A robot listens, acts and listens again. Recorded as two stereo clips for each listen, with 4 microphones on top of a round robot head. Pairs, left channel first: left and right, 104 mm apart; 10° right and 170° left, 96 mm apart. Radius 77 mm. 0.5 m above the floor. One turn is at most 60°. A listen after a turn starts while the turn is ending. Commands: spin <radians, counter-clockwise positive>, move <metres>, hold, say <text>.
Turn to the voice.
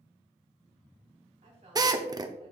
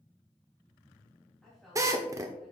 spin -1.05
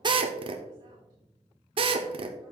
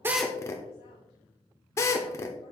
spin -0.70
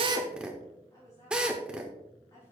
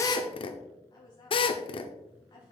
spin 0.52
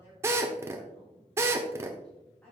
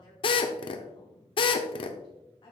spin 0.17
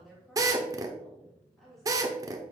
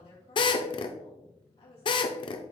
say Facing the woman speaking, 2 to 4 m away.